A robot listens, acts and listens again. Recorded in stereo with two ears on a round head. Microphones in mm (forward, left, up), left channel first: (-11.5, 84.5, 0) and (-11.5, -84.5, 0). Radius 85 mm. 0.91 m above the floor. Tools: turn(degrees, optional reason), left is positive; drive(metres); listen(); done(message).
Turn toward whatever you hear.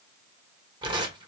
turn(degrees=-25, reason="The tearing paper: about 25° right or 155° right.")
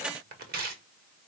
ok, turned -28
turn(degrees=-125, reason="So it is at 125° right.")
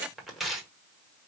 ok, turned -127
done("Facing the tearing paper, 1 to 2 m away.")